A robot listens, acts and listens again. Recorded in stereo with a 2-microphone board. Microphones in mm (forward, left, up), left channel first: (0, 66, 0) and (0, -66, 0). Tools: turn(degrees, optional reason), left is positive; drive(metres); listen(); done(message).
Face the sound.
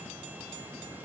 listen()
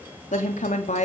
turn(degrees=65, reason="The woman speaking: about 65° left or 115° left.")
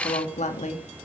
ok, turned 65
turn(degrees=65, reason="So it is at 65° left.")
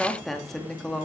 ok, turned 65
done("Found it: a woman speaking, straight ahead, 2 to 4 m away.")